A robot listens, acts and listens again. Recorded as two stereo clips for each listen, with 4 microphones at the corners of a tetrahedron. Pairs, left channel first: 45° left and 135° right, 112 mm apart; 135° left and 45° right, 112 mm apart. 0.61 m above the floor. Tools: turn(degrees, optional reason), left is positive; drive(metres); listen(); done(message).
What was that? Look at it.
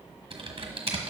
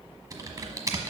turn(degrees=-105, reason="The typing on a keyboard: 105° right.")
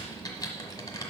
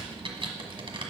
turn(degrees=-10, reason="The typing on a keyboard is now 10° right.")
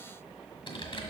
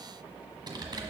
done("Found it: typing on a keyboard, straight ahead, 1 to 2 m away.")